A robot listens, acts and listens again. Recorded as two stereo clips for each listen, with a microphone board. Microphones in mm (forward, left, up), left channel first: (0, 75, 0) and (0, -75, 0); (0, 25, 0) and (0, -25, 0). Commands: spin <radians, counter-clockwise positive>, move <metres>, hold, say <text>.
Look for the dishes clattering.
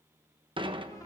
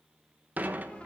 spin -0.61
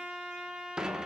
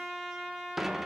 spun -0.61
say Found it: dishes clattering, straight ahead, under 1 m away.